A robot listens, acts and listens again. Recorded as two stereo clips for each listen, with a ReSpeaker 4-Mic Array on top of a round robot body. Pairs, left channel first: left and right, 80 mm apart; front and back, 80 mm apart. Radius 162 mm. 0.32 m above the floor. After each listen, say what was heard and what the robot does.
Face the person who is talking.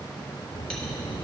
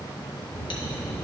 The child speaking: 60° left. Turn 60° left.
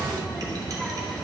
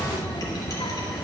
Found it: a child speaking, straight ahead.